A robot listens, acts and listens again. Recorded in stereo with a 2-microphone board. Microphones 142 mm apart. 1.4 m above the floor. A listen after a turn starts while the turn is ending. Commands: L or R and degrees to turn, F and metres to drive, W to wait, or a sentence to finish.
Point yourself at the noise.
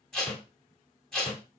L30
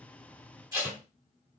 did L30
R25
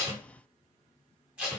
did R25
Facing the tape being pulled.